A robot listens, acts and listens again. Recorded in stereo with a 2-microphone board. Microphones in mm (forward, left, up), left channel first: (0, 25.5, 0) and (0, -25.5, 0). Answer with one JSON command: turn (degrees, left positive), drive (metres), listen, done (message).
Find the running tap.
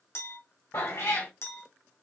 {"listen": true}
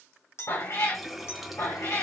{"turn": -30}
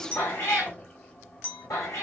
{"turn": 25}
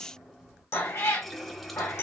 {"done": "Facing the running tap, 1 to 2 m away."}